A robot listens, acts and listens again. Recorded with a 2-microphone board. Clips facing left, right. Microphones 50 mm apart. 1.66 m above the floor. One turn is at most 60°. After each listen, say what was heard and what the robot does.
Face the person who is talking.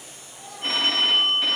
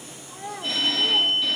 The child speaking: about 65° right or 115° right. Turn 60° right.
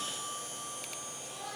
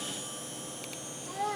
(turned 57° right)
So it is at 50° right. Turn 50° right.
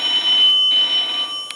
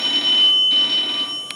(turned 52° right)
Keep listening.
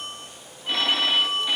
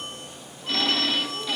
Keep listening.
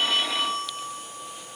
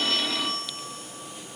Facing where the child speaking came from. I can't hear it now.